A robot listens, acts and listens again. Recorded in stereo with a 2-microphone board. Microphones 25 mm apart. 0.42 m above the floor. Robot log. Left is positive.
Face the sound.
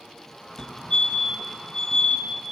note: The fire alarm: about 30° left or 150° left.
cmd yaw +30
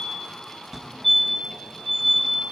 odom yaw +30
note: So it is at 10° left.
cmd yaw +10
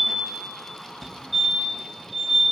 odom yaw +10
end: Found it: a fire alarm, straight ahead, over 4 m away.